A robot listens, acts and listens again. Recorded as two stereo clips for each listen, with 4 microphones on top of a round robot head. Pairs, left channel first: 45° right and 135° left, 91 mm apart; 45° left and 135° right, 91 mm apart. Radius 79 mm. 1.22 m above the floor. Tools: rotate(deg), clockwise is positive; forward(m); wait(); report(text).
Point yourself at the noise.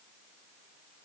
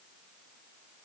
wait()
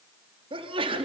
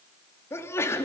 rotate(-105)
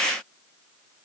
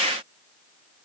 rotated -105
report("I heard a sneeze from this way, but can't make it out now.")